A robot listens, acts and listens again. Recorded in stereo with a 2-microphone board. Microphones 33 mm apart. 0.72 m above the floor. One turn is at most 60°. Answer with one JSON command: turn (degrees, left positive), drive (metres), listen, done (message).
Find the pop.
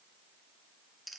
{"listen": true}
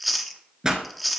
{"turn": -20}
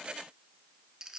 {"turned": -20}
{"listen": true}
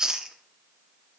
{"done": "I heard a pop, but can't make it out now. It was about straight ahead or 140° right."}